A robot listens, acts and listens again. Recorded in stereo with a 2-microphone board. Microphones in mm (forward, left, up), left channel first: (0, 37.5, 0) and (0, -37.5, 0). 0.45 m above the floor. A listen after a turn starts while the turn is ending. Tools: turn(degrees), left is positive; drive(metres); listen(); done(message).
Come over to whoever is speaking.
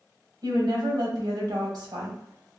turn(degrees=-65)
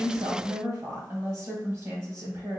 turn(degrees=-45)
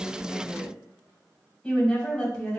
turn(degrees=10)
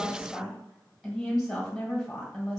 drive(metres=1.0)
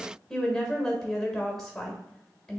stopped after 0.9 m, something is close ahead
done("Arrived at the woman speaking, straight ahead.")